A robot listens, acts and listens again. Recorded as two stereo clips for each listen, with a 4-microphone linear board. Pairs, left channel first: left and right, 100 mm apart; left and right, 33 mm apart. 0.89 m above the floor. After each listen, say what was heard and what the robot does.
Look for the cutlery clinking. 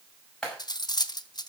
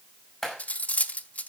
The cutlery clinking: about 45° left or 135° left. Turn 45° left.
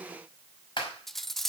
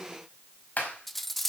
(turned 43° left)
Facing the cutlery clinking, under 1 m away.